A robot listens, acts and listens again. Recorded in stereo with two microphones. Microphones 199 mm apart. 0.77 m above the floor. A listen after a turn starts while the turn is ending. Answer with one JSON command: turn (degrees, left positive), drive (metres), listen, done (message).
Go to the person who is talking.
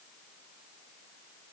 {"listen": true}
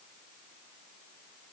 {"listen": true}
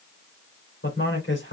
{"turn": 90}
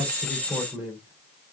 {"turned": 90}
{"drive": 1.0}
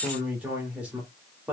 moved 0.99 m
{"drive": 1.0}
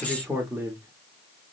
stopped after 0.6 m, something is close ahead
{"turn": -10}
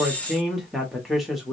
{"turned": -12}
{"done": "I am next to the man speaking."}